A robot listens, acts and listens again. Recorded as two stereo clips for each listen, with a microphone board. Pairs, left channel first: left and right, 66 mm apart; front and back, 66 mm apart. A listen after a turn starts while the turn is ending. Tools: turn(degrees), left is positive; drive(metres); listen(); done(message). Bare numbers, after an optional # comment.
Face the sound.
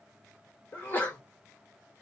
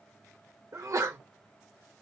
# The sneeze: 150° left.
turn(150)
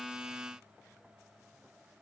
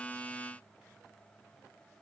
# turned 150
done("Facing where the sneeze came from. I can't hear it now.")